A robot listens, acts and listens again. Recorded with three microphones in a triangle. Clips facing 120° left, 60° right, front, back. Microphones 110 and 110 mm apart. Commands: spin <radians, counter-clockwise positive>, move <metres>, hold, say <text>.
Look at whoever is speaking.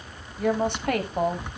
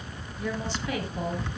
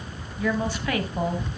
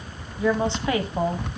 spin 2.09
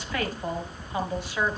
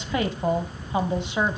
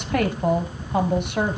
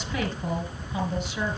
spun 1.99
say Facing the woman speaking.